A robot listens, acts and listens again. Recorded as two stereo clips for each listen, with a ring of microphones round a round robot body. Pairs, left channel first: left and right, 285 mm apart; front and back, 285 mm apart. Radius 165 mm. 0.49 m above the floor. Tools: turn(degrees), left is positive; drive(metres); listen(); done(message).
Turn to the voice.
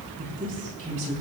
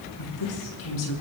turn(degrees=-20)
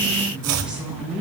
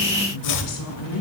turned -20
done("Found it: a woman speaking, straight ahead.")